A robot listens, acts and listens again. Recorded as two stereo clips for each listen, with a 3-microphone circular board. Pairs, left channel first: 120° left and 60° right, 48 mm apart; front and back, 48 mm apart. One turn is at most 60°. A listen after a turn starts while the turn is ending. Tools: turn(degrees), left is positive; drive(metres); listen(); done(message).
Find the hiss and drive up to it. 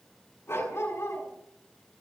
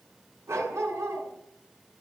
listen()
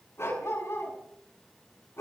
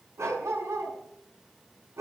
listen()
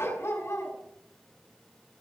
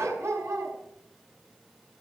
done("I can't make out a hiss to turn to.")